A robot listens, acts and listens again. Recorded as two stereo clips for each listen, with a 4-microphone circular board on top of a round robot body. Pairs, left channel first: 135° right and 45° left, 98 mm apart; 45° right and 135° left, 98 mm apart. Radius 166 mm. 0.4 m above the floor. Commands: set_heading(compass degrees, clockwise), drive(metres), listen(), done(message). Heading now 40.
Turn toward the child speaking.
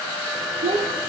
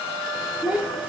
set_heading(340)
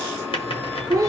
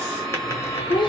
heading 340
set_heading(350)
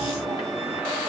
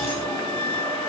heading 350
listen()
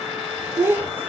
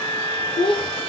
set_heading(15)
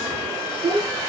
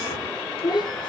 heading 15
done("Facing the child speaking.")